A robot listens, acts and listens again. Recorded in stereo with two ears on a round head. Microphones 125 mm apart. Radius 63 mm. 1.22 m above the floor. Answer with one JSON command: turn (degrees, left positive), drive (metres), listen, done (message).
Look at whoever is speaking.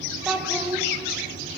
{"turn": -30}
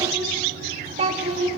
{"turn": -130}
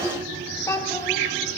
{"turn": 25}
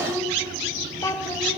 {"turn": 25}
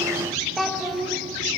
{"done": "Found it: a child speaking, straight ahead."}